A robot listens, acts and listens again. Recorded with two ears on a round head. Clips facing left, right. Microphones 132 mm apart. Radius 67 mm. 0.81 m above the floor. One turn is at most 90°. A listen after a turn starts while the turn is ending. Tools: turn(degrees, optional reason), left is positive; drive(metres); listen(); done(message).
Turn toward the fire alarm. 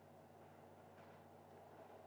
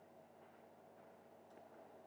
listen()
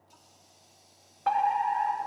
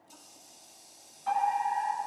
turn(degrees=70, reason="The fire alarm: about 70° left or 110° left.")
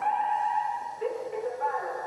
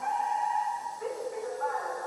turn(degrees=25, reason="So it is at 25° left.")
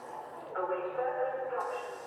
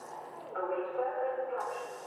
done("Found it: a fire alarm, straight ahead, over 4 m away.")